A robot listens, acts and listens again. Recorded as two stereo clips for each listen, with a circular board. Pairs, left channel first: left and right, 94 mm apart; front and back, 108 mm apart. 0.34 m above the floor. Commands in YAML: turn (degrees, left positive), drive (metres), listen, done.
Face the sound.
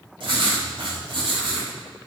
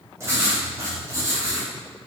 turn: -115
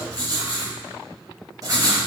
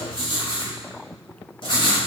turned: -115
turn: -40
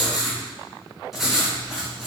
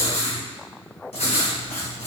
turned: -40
done: "Found it: writing, straight ahead."